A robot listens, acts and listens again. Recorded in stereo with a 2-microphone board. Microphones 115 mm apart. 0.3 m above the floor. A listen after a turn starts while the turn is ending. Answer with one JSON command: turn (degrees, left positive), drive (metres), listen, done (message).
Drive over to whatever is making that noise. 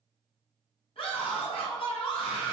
{"turn": 60}
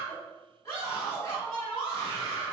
{"turn": 30}
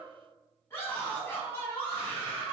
{"turn": 25}
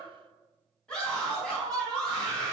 {"turn": 10}
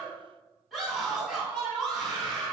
{"drive": 1.0}
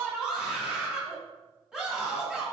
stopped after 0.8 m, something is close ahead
{"turn": -15}
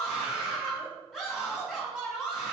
{"done": "I am next to the scream."}